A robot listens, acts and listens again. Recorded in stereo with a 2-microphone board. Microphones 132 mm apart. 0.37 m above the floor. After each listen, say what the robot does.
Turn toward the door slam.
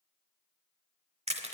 Keep listening.
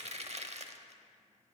Keep listening.
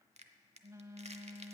I can't make out a door slam, only a phone buzzing and crushing.